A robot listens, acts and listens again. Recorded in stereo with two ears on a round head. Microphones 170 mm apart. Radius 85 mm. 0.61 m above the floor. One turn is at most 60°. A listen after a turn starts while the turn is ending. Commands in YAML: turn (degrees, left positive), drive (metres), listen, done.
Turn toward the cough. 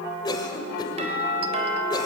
turn: 20
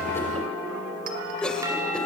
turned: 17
done: "Found it: a cough, straight ahead."